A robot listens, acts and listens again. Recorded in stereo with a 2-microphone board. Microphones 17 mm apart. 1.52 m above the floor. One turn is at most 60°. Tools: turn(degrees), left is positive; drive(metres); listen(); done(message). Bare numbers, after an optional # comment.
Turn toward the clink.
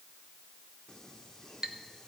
# The clink: about 50° right or 130° right.
turn(-50)
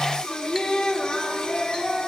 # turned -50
listen()
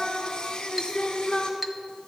# So it is at 10° right.
turn(-10)
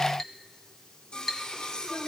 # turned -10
done("Found it: a clink, straight ahead, under 1 m away.")